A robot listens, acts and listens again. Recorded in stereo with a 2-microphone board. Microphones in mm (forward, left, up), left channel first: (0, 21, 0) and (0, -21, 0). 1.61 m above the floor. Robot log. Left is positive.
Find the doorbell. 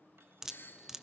note: The doorbell: about 70° left or 110° left.
cmd yaw +70
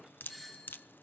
end: Facing the doorbell, 2 to 4 m away.